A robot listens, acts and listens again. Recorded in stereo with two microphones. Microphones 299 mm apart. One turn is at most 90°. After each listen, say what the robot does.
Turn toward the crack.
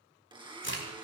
Turn 40° left.
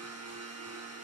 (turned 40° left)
Keep listening.
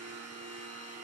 I heard a crack, but can't make it out now. It was about straight ahead or 100° left.